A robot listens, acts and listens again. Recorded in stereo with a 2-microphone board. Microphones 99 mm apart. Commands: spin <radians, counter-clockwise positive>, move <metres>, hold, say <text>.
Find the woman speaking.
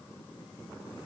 hold
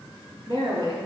spin -1.22
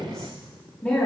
spin 0.26
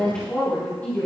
spin 0.35
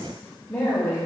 spin 0.26
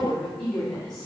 spin 0.17
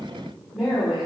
say Found it: a woman speaking, straight ahead.